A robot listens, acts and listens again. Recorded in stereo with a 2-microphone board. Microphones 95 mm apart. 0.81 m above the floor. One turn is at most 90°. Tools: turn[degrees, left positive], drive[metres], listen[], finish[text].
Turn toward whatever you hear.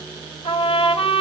Action: turn[90]
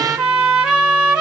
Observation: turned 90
Thought: So it is at 10° right.
Action: turn[-10]
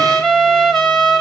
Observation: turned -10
Action: finish[Facing the trumpet.]